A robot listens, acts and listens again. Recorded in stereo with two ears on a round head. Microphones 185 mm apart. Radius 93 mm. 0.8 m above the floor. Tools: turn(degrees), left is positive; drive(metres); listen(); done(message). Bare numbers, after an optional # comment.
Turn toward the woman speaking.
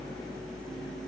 listen()
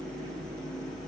listen()
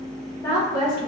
# The woman speaking: about 25° left or 155° left.
turn(25)
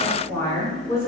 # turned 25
# The woman speaking: about 15° left or 165° left.
turn(15)
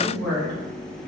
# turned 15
turn(30)
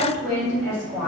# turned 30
# So it is at 15° right.
turn(-15)
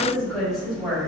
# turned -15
done("Facing the woman speaking.")